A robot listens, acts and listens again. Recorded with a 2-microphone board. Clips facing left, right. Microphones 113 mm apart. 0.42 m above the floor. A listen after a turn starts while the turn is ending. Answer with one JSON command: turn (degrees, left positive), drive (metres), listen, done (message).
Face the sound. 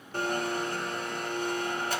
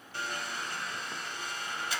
{"turn": 55}
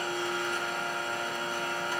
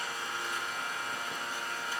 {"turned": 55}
{"turn": 70}
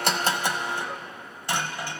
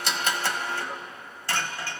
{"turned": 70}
{"turn": 20}
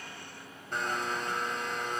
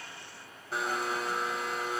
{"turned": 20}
{"done": "Found it: a blender, straight ahead, under 1 m away."}